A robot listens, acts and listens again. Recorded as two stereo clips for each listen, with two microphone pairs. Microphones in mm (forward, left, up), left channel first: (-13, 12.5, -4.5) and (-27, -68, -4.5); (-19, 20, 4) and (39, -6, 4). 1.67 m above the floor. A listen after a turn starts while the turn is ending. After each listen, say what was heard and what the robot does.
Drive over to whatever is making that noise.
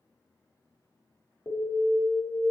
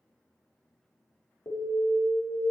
The alarm: 135° left. Turn 135° left.
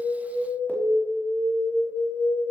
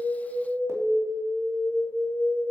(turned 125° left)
The alarm is now 10° left. Turn 10° left.
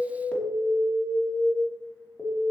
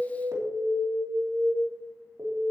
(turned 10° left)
Drive 1.0 m forward.
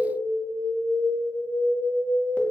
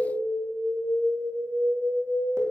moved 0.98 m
Drive 1.0 m forward.
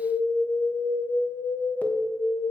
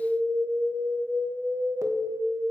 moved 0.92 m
The alarm is now 10° left. Turn 10° left.
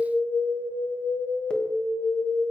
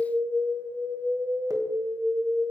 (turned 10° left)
Drive 1.0 m forward.
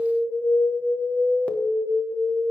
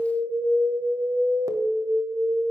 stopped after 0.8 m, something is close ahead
Arrived at the alarm, straight ahead.